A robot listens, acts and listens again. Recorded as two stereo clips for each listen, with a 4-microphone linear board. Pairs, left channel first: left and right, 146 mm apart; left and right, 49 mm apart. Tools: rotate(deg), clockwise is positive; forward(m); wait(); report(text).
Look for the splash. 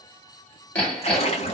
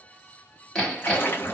rotate(-45)
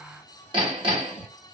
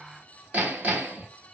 wait()
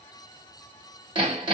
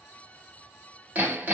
report("I heard a splash, but can't make it out now. It was about straight ahead or 90° left.")